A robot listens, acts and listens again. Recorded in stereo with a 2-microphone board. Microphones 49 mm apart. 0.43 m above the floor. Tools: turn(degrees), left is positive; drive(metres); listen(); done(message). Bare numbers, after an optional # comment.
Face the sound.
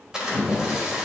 turn(-30)
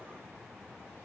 listen()
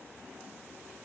done("I heard a splash, but can't make it out now. It was about 20° left or 140° right.")